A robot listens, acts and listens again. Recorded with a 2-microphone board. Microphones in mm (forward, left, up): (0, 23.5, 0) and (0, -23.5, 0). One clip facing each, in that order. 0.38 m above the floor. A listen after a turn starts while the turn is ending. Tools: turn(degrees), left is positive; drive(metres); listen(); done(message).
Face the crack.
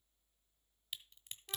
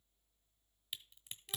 turn(degrees=30)
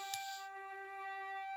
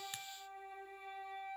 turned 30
listen()
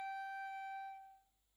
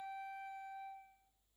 done("I heard a crack, but can't make it out now. It was about 30° right or 150° left.")